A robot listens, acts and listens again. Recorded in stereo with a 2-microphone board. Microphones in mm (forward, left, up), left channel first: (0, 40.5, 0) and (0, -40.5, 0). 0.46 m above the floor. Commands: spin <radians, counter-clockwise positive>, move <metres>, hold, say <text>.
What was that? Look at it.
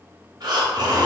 spin -1.05
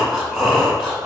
say Facing the breathing.